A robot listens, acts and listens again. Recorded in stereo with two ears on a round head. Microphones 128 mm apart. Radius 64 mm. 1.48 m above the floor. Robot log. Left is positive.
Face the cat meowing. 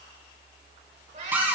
note: The cat meowing: about 55° right or 125° right.
cmd yaw -55
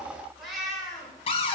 end: Found it: a cat meowing, straight ahead, 2 to 4 m away.